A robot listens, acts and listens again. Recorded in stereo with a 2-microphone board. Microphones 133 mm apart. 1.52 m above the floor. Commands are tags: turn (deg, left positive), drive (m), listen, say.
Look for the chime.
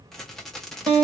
<listen/>
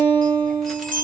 <turn deg="-90"/>
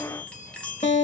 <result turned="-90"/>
<turn deg="10"/>
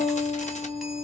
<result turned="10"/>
<listen/>
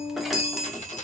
<say>Facing the chime, 1 to 2 m away.</say>